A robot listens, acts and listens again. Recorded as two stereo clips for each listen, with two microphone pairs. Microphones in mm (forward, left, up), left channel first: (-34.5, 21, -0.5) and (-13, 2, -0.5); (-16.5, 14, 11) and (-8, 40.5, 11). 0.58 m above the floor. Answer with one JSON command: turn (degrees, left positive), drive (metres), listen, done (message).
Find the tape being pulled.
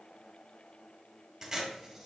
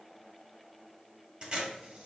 {"turn": 40}
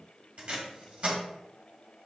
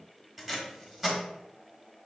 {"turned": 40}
{"done": "Facing the tape being pulled, 1 to 2 m away."}